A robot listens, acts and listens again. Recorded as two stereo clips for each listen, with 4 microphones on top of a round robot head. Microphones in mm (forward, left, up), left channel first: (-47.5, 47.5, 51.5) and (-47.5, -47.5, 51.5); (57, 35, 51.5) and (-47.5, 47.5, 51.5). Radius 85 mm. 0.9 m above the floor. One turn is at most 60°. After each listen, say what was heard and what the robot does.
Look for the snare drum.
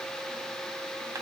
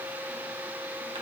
Keep listening.
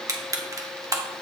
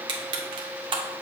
Keep listening.
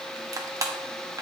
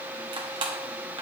I can't make out a snare drum, only crushing.